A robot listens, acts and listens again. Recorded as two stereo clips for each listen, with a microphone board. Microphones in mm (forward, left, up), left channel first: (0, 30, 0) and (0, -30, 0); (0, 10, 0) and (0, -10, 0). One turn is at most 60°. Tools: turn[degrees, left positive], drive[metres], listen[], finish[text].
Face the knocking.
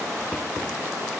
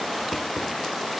Action: listen[]
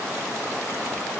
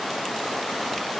Action: listen[]
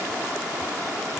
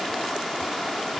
Action: finish[I can't make out knocking.]